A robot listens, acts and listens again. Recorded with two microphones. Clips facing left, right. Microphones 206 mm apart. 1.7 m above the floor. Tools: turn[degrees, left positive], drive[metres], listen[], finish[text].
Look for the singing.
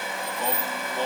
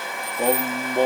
Thought: The singing: about 55° right or 125° right.
Action: turn[-55]
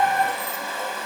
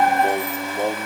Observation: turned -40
Thought: So it is at 80° right.
Action: turn[-80]
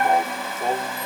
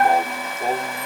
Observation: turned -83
Action: finish[Facing the singing.]